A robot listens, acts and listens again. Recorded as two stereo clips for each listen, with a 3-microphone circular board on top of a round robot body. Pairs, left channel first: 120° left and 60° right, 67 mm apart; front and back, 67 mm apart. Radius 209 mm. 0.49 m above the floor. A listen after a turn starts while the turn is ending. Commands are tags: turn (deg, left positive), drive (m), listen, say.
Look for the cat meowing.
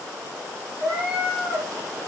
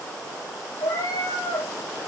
<turn deg="15"/>
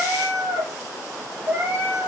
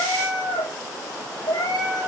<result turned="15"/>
<say>Facing the cat meowing.</say>